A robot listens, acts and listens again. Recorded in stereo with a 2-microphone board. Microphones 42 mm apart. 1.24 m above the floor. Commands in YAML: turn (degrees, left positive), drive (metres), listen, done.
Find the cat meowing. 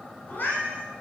turn: 45
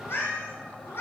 turn: 115
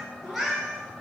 done: "Facing the cat meowing."